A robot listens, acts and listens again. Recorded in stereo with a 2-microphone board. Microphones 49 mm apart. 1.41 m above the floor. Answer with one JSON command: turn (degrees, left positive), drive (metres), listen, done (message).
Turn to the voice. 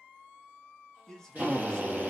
{"turn": 30}
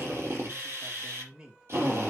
{"turn": -15}
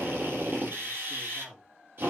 {"done": "Facing the man speaking, 2 to 4 m away."}